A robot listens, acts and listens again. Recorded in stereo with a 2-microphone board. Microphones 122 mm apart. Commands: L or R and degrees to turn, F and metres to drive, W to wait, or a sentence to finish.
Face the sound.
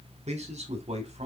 R60
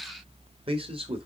R55
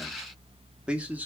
R15
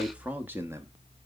R25
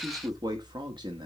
R40
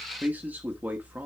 R15
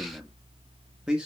Facing the man speaking.